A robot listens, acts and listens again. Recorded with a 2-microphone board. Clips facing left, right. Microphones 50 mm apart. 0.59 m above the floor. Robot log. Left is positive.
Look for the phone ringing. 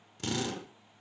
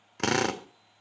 cmd idle
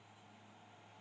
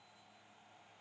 cmd idle
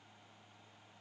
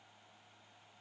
end: I can't make out a phone ringing, only a drill.